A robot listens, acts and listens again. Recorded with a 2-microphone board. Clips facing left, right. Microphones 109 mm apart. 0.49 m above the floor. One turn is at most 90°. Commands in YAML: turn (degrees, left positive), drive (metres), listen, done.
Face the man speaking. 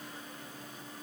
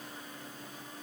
listen: true
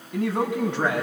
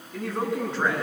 turn: 70
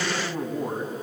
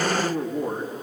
turn: 15
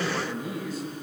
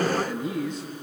done: "Facing the man speaking."